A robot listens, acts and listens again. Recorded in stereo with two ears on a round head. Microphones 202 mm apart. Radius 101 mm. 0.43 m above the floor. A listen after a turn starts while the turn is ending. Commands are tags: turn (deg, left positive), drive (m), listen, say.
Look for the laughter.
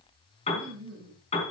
<turn deg="-55"/>
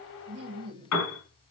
<turn deg="-25"/>
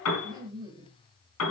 <turn deg="-20"/>
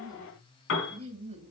<turn deg="-30"/>
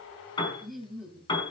<say>Facing the laughter, 2 to 4 m away.</say>